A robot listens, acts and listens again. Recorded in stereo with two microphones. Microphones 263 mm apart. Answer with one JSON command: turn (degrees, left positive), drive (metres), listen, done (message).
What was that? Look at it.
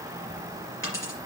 {"turn": 50}
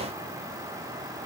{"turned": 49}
{"listen": true}
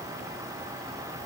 {"done": "I heard a dropped coin, but can't make it out now. It was about straight ahead or 80° left."}